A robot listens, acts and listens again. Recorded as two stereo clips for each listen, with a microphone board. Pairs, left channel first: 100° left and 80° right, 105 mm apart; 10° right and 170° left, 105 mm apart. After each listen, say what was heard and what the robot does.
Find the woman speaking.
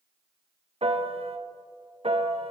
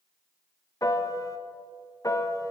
Keep listening.
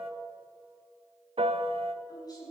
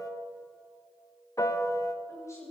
The woman speaking: 50° left. Turn 50° left.
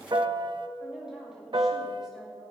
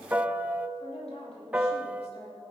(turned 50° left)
Found it: a woman speaking, straight ahead.